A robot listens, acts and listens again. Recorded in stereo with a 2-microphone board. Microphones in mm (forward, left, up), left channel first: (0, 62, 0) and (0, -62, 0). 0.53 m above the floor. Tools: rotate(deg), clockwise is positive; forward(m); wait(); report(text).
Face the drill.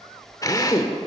rotate(-30)
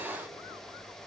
wait()
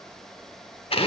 rotate(-115)
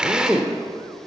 rotate(10)
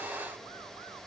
wait()
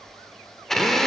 report("Found it: a drill, straight ahead.")